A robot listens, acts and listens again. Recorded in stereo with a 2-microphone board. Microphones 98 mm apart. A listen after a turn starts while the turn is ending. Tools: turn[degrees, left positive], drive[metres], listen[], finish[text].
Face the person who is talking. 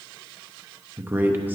Thought: The man speaking: about 20° right or 160° right.
Action: turn[-20]
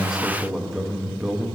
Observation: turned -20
Action: finish[Facing the man speaking.]